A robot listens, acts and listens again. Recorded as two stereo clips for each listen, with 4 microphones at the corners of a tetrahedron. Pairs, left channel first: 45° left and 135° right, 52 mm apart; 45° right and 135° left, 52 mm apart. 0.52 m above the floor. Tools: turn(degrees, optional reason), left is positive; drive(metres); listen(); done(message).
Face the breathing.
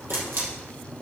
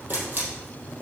listen()
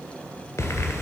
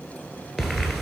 turn(degrees=50, reason="The breathing: 50° left.")
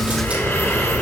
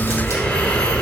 turn(degrees=25, reason="The breathing is now 25° left.")
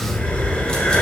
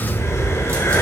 turn(degrees=-15, reason="The breathing is now 15° right.")
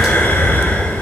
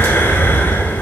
done("Facing the breathing.")